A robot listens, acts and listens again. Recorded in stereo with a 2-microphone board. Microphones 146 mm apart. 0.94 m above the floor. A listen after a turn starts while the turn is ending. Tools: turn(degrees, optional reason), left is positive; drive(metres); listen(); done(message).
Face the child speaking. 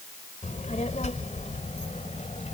turn(degrees=55, reason="The child speaking: about 55° left or 125° left.")
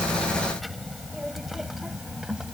done("Found it: a child speaking, straight ahead.")